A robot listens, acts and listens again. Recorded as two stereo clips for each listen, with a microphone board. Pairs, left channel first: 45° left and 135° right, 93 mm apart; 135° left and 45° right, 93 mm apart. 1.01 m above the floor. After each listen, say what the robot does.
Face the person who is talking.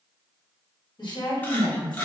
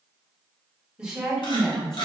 Turn 50° left.
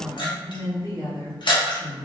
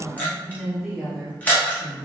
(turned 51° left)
Turn 65° left.
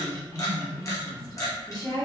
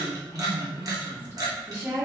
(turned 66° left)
Turn 15° left.
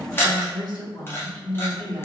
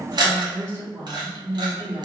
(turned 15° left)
Facing the woman speaking, 2 to 4 m away.